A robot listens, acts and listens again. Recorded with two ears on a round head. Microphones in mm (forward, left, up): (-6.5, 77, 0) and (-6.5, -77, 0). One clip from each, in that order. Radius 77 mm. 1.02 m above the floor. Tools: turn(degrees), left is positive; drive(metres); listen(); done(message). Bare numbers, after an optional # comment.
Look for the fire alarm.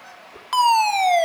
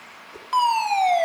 # The fire alarm: about 45° left or 135° left.
turn(45)
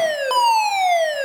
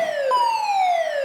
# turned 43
# So it is at 85° left.
turn(85)
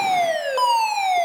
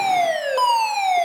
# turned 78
done("Found it: a fire alarm, straight ahead, 2 to 4 m away.")